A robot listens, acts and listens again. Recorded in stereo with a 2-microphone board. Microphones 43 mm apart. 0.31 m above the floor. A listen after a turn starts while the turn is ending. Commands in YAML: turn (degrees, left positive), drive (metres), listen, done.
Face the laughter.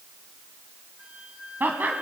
turn: -50
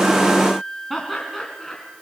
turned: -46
done: "Facing the laughter."